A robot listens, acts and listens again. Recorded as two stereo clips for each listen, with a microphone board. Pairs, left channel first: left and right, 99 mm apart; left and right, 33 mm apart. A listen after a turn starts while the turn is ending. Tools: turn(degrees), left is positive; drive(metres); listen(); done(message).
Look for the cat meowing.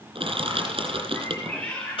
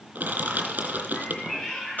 turn(degrees=30)
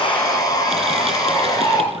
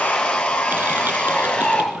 listen()
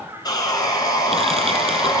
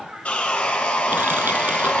turn(degrees=-25)
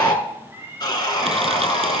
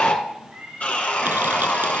turn(degrees=-25)
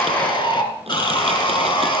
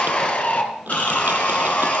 listen()
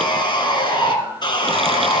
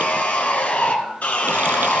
listen()
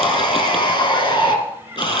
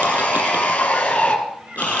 turn(degrees=-20)
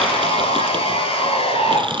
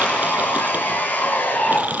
listen()
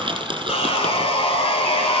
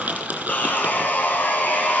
listen()
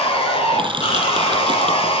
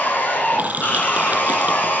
done("I heard a cat meowing from this way, but can't make it out now.")